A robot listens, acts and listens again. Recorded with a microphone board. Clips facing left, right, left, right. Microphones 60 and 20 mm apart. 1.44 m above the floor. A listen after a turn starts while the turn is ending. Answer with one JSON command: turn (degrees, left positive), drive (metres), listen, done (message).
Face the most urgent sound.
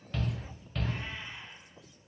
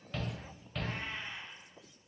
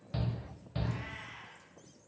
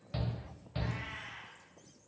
{"turn": 30}
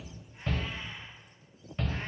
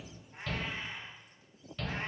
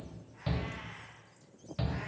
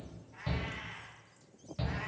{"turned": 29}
{"turn": 155}
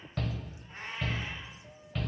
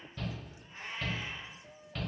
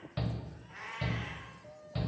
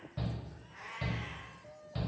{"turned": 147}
{"done": "Found it: a shout, straight ahead."}